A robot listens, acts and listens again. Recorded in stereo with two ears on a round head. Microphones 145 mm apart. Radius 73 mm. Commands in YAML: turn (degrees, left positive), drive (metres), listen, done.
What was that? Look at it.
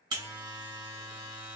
turn: -25
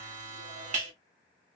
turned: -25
turn: -125
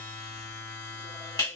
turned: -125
turn: 25
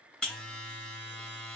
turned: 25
done: "Found it: a buzzer, straight ahead, 1 to 2 m away."